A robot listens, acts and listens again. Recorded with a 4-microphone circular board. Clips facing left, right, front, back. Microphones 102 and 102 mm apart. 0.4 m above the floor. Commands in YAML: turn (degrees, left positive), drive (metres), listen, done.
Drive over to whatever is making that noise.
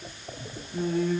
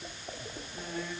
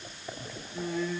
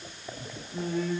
turn: 130
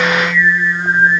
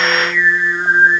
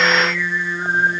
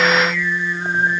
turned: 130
turn: -20
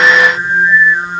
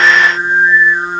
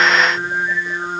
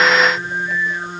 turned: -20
turn: -10
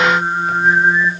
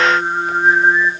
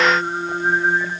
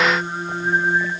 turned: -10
drive: 1.0
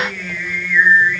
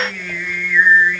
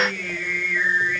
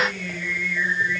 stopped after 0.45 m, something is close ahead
done: "Something is in my way. I am facing the singing but have not reached it."